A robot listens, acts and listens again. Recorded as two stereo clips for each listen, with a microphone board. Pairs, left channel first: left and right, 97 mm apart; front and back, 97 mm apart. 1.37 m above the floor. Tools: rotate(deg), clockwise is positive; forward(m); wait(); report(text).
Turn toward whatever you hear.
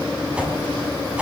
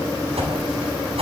rotate(170)
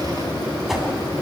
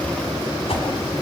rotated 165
report("Facing the whoosh.")